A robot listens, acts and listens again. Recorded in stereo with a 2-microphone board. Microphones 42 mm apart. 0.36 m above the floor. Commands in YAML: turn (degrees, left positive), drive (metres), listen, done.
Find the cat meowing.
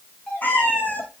turn: 50
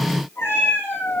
turn: 70
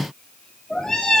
turn: 10
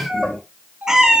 turn: -20
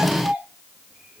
listen: true
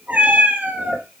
turn: -40
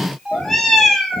done: "Found it: a cat meowing, straight ahead."